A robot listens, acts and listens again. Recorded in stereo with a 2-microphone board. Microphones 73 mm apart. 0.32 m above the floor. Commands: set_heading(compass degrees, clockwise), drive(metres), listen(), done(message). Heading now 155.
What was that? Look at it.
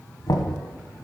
set_heading(90)
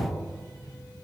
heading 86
set_heading(56)
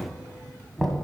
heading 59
done("Found it: knocking, straight ahead, 1 to 2 m away.")